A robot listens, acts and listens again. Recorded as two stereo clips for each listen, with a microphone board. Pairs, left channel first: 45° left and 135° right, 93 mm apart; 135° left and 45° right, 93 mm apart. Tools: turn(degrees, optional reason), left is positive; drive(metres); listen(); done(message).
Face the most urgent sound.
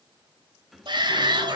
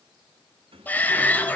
turn(degrees=-155, reason="The shout: 155° right.")
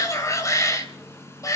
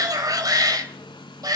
done("Facing the shout.")